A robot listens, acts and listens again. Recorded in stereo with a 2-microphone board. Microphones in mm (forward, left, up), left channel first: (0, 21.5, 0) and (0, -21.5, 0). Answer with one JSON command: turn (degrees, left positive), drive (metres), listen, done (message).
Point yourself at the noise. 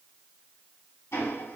{"turn": 90}
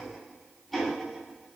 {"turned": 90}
{"done": "Found it: ticking, straight ahead, 2 to 4 m away."}